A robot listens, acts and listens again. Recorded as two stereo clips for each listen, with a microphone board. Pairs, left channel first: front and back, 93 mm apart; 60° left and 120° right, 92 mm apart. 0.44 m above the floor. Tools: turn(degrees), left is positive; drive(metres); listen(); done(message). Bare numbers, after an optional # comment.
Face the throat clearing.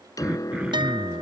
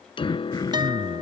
# The throat clearing: 100° left.
turn(100)
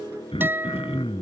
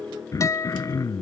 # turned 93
# The throat clearing is now 10° left.
turn(10)
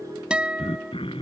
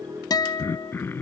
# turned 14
done("Facing the throat clearing.")